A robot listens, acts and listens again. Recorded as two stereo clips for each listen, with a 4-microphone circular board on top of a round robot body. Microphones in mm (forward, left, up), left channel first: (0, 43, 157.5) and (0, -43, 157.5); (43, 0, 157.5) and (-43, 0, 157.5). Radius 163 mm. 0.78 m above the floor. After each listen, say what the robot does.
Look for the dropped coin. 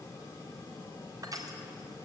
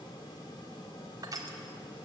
Keep listening.
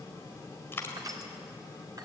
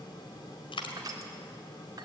Turn 25° left.
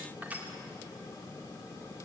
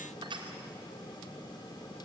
Facing where the dropped coin came from. I can't hear it now.